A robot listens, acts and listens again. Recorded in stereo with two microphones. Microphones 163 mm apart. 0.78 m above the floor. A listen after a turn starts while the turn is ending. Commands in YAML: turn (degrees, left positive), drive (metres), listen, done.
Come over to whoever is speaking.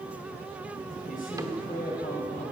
turn: 60
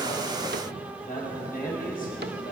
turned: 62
turn: 60
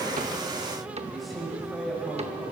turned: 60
drive: 1.0
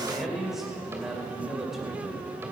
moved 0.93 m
drive: 1.0
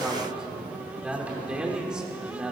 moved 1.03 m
drive: 1.0
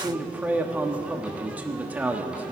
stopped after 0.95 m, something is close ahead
turn: -10
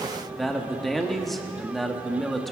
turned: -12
done: "Arrived at the man speaking, straight ahead."